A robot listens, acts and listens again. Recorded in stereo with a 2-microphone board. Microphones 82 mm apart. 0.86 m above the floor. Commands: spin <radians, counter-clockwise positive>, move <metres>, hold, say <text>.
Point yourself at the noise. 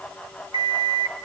spin -1.13
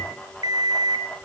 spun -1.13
spin -0.87
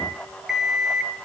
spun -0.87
say Found it: an alarm clock, straight ahead, 2 to 4 m away.